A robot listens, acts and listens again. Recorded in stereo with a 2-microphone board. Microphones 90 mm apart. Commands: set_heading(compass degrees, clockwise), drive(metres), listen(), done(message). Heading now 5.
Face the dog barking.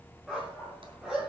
set_heading(35)
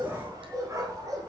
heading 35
set_heading(175)
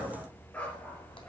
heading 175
set_heading(160)
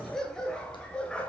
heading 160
set_heading(150)
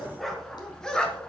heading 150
set_heading(140)
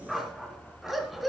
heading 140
done("Found it: a dog barking, straight ahead.")